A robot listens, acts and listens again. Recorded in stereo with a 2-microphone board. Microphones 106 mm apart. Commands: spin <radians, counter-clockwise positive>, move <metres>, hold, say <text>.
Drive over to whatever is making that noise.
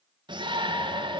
spin -0.79
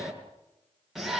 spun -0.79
move 1.0
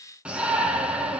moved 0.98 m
spin -0.17
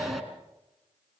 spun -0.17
move 1.0
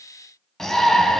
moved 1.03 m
move 1.0
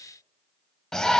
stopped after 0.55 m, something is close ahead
say I am next to the shout.